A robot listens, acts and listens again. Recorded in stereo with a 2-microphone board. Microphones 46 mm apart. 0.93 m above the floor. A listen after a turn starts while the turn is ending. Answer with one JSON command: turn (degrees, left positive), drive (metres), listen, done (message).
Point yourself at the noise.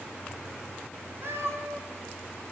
{"turn": -65}
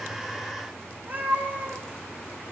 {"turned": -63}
{"turn": -35}
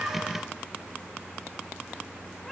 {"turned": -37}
{"listen": true}
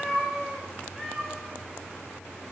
{"done": "Facing the cat meowing, over 4 m away."}